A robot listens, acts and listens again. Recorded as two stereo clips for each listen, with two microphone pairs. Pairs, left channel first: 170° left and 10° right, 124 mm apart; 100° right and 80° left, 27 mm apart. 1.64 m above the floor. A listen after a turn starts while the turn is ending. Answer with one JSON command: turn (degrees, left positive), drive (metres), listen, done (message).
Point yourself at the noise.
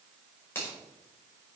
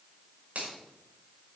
{"turn": 100}
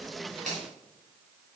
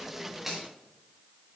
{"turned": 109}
{"turn": -10}
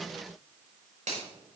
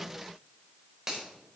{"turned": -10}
{"done": "Found it: a finger snap, straight ahead."}